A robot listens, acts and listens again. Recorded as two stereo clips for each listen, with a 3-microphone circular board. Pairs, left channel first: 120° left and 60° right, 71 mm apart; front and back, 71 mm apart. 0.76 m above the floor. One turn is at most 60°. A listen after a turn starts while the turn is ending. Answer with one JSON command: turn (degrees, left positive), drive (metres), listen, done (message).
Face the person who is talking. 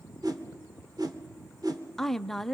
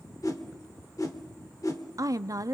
{"turn": -60}
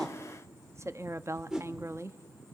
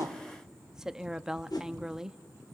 {"turn": -60}
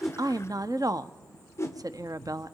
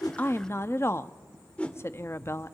{"turn": -50}
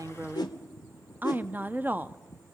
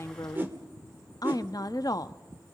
{"done": "Facing the woman speaking."}